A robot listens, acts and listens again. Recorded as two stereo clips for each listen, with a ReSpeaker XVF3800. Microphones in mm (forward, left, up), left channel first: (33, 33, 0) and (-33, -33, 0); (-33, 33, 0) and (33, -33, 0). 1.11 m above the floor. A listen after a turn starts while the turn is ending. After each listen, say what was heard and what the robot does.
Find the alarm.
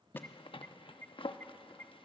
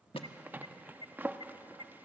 The alarm: 115° left. Turn 115° left.
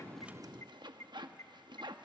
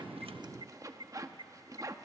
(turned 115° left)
The alarm is now 10° right. Turn 10° right.
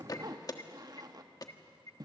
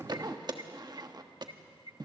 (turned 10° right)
Found it: an alarm, straight ahead, 1 to 2 m away.